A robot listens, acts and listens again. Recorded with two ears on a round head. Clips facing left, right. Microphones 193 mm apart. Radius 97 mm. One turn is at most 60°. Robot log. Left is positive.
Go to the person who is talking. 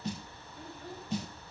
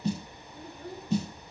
note: The child speaking: about 40° right or 140° right.
cmd yaw -40
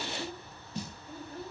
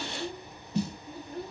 note: So it is at 100° right.
cmd yaw -60
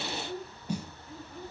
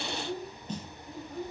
note: The child speaking is now 40° right.
cmd yaw -40
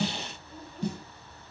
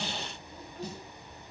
cmd fwd 1.0
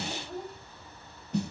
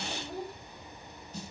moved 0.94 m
cmd fwd 1.0
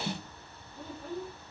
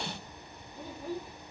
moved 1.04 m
note: The child speaking is now 10° right.
cmd yaw -10
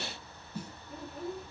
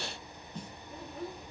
cmd fwd 1.0
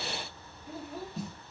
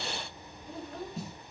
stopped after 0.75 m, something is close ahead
end: I am next to the child speaking.